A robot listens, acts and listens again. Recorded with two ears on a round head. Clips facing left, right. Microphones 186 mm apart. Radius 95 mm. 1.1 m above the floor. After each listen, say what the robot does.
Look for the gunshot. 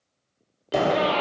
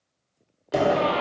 Turn 30° right.
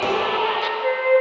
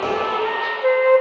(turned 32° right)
Keep listening.
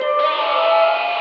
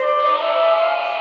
I heard a gunshot, but can't make it out now. It was about 30° left or 145° right.